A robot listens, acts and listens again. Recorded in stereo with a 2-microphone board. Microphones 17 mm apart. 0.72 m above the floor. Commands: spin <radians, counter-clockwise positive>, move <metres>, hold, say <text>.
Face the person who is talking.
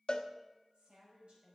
spin -1.57
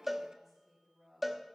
say Facing the woman speaking.